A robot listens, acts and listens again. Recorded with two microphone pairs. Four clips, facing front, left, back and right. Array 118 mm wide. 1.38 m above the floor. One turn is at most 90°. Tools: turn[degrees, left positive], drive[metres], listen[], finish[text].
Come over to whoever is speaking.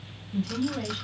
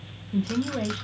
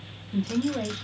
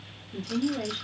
Thought: The woman speaking: 130° left.
Action: turn[90]
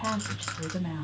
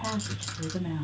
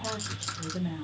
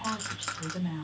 Thought: The woman speaking is now 25° left.
Action: turn[25]
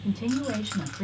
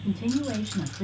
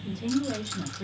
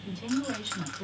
Thought: The woman speaking is now 20° left.
Action: turn[20]
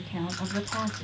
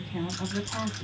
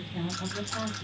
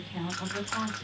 Thought: The woman speaking is now 10° left.
Action: turn[10]
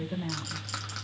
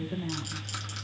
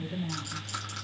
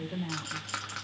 Action: drive[1.0]
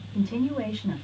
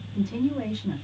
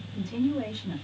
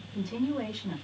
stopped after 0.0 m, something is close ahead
Action: finish[Blocked. The woman speaking is further on, straight ahead.]